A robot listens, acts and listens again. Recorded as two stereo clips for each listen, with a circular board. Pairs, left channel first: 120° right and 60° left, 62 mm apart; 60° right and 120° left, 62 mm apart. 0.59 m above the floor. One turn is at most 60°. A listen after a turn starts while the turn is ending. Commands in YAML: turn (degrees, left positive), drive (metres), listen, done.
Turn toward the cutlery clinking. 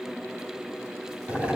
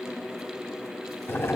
listen: true
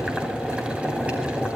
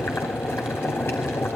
listen: true
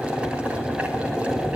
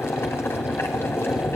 done: "I can't make out cutlery clinking, only boiling."